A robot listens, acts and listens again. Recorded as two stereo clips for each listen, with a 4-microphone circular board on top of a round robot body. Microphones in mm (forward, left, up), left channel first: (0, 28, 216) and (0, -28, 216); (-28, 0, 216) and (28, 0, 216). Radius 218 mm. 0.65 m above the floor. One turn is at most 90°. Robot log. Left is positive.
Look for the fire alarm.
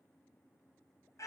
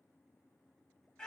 cmd idle
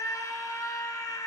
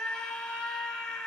cmd idle
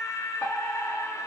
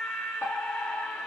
note: The fire alarm: 150° left.
cmd yaw +90
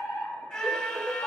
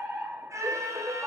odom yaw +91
note: The fire alarm is now 60° left.
cmd yaw +60
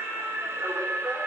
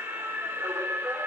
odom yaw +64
cmd idle
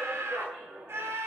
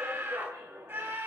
end: Found it: a fire alarm, straight ahead, 2 to 4 m away.